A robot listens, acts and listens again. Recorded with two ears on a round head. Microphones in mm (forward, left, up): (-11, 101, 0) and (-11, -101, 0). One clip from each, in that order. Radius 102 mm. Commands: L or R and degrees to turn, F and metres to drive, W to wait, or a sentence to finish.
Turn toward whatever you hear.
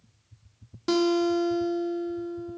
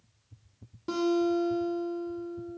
L50
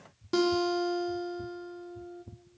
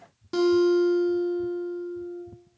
Facing the guitar.